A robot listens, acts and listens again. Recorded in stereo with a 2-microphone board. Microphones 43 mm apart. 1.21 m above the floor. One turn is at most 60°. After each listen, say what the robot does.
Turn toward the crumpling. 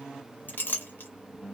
Keep listening.
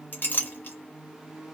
Keep listening.
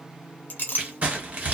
Turn 35° right.
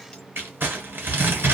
Turn 60° right.
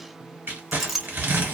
Turn 60° right.
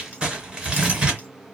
Turn 30° right.
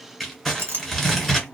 Found it: crumpling, straight ahead, 1 to 2 m away.